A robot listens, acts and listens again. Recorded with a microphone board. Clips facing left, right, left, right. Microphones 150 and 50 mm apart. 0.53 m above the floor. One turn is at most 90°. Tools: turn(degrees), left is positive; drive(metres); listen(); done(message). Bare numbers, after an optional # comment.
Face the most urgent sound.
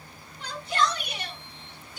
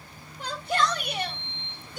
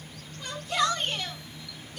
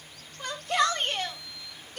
# The shout: about 55° right or 125° right.
turn(-55)
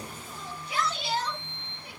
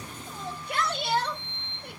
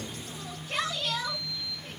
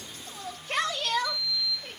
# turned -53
# So it is at 65° right.
turn(-65)
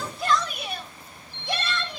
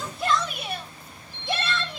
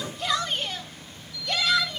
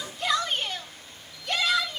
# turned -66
done("Found it: a shout, straight ahead.")